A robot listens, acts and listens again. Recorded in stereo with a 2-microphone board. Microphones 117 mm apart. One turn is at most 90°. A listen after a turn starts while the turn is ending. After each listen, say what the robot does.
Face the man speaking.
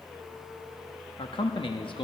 Turn 50° left.
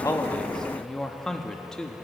Found it: a man speaking, straight ahead, under 1 m away.